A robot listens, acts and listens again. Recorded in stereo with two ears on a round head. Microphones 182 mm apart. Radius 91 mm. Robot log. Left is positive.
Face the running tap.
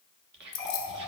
note: The running tap: about 15° left or 165° left.
cmd yaw +15
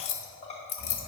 note: So it is at 150° left.
cmd yaw +150
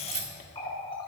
note: The running tap is now 25° left.
cmd yaw +25
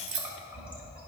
end: Facing the running tap, 1 to 2 m away.